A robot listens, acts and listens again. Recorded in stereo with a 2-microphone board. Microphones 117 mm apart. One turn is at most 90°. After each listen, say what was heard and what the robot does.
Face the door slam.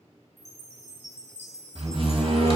The door slam: about 55° right or 125° right. Turn 55° right.
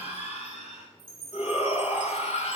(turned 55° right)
Keep listening.
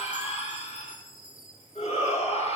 I heard a door slam, but can't make it out now. It was about straight ahead or 70° right.